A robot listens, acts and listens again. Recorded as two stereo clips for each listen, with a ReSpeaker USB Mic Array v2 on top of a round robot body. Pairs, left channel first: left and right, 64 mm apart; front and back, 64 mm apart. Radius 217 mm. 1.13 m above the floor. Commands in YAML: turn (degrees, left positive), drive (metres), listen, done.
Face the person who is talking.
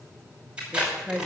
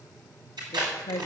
done: "Found it: a woman speaking, straight ahead, 1 to 2 m away."